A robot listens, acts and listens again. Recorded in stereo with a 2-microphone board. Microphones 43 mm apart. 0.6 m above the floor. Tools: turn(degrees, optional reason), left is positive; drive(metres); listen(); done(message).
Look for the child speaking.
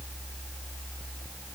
listen()
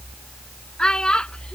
turn(degrees=20, reason="The child speaking: about 20° left or 160° left.")
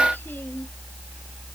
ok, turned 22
listen()
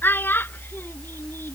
turn(degrees=125, reason="So it is at 125° left.")
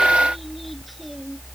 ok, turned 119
listen()
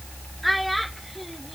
done("Facing the child speaking.")